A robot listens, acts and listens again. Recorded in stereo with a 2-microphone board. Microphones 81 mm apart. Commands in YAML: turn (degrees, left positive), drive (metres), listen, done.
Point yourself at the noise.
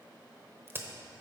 turn: -30
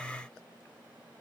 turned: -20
listen: true
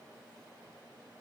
done: "I heard a crack, but can't make it out now. It was about 10° right or 130° right."